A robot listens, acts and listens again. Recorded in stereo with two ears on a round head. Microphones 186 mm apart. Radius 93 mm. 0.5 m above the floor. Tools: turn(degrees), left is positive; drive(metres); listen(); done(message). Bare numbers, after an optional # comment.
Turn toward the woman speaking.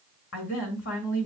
# The woman speaking: about 65° left or 115° left.
turn(65)
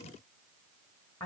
# So it is at 15° left.
turn(15)
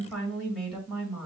done("Found it: a woman speaking, straight ahead, 1 to 2 m away.")